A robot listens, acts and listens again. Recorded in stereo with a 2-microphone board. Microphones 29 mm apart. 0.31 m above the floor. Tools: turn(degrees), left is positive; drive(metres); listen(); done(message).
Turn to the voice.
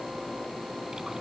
listen()
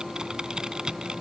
listen()
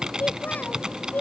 turn(degrees=90)
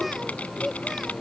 done("Facing the child speaking.")